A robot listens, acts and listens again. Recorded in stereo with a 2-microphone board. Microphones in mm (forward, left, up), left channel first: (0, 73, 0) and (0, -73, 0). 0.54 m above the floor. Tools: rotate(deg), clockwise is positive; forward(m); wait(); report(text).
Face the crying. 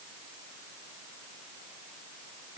wait()
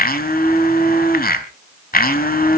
wait()
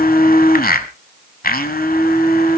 report("I can't make out crying to turn to.")